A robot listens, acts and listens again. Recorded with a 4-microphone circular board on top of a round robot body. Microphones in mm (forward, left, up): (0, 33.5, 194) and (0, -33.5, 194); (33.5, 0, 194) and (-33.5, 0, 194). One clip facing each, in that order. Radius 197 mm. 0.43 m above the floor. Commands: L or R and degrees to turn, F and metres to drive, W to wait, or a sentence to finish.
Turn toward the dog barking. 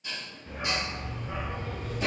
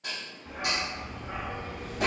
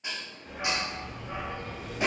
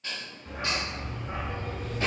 R135
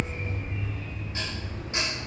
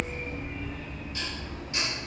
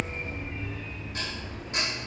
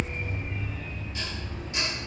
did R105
R90
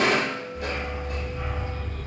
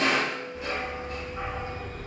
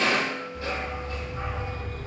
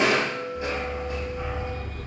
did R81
R35
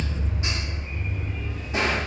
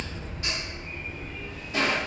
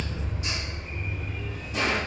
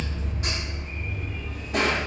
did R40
Facing the dog barking.